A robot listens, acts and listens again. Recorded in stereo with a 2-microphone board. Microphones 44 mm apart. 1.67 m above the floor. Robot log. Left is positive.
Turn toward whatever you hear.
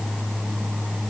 cmd idle
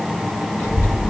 note: The child speaking: about 70° left or 110° left.
cmd yaw +70
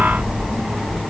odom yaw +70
note: So it is at 10° left.
cmd yaw +10
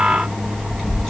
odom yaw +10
end: Found it: a child speaking, straight ahead.